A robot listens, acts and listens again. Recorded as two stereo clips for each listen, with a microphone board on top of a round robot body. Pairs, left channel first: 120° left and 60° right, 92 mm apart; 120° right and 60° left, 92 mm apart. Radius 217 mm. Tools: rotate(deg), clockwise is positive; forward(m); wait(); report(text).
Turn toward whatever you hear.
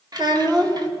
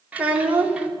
rotate(15)
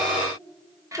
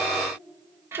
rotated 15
report("Facing the child speaking, 1 to 2 m away.")